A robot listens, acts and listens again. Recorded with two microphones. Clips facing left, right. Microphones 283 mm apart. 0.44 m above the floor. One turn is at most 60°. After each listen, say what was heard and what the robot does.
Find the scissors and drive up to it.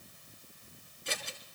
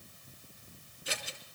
Turn 30° right.
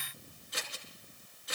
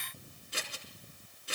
So it is at 145° right. Turn 60° right.
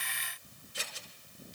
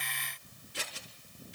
The scissors is now 80° right. Turn 60° right.
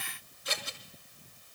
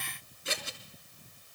The scissors is now 30° right. Turn 30° right.
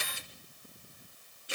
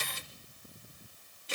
The scissors is now 15° left. Turn 15° left.
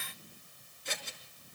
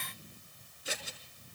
Drive 1.0 m forward.
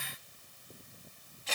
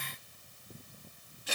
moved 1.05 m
The scissors is now 10° right. Turn 10° right.
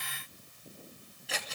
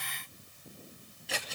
Drive 1.0 m forward.
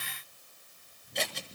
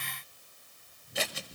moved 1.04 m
Drive 1.0 m forward.
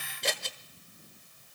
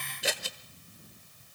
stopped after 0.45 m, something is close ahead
I am next to the scissors.